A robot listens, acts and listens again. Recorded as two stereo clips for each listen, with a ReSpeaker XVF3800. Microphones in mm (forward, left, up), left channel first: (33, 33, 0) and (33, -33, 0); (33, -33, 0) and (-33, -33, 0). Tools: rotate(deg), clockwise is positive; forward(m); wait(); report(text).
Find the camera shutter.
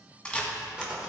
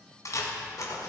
rotate(-15)
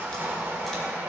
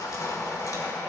wait()
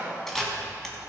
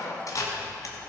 report("Facing the camera shutter, 1 to 2 m away.")